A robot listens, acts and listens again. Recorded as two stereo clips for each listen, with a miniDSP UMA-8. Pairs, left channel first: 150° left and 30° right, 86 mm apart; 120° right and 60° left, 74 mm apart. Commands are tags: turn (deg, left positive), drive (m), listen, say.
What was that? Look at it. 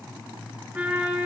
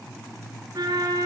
<turn deg="45"/>
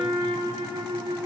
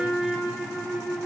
<turn deg="-15"/>
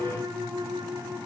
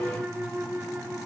<say>Facing the trumpet, 2 to 4 m away.</say>